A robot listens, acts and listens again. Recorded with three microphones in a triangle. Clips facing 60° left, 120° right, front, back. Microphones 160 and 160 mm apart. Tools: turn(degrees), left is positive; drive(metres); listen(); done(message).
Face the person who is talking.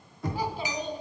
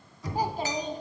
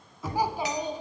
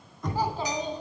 turn(degrees=-75)
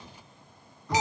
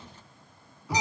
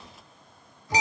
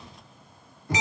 listen()
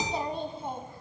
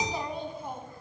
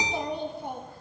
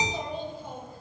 done("Facing the child speaking.")